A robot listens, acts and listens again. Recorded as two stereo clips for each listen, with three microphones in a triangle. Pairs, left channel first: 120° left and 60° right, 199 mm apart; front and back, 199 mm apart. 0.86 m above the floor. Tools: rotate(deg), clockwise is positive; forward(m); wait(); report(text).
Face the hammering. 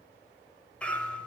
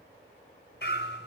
rotate(-35)
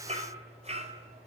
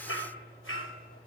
report("Facing the hammering, over 4 m away.")